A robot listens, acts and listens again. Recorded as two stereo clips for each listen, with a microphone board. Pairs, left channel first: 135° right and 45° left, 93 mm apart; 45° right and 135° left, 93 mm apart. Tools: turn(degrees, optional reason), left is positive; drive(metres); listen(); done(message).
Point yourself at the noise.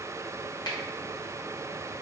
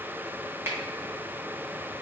turn(degrees=-165, reason="The finger snap: 165° right.")
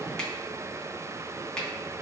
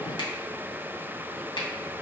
turn(degrees=-55, reason="The finger snap is now 55° right.")
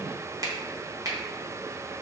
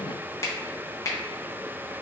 done("Facing the finger snap, under 1 m away.")